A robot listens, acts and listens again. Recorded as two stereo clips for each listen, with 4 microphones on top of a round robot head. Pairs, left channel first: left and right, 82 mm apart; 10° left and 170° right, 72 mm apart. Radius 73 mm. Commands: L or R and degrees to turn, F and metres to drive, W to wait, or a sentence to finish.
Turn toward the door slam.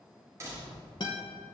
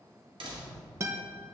R155
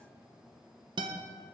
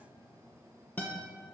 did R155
Facing where the door slam came from. I can't hear it now.